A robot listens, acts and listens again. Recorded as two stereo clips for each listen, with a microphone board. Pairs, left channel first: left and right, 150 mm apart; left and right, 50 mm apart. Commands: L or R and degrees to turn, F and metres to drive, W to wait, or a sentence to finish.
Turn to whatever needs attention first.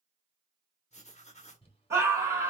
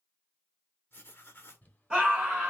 R20
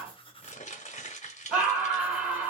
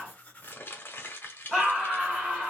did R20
Facing the scream, 1 to 2 m away.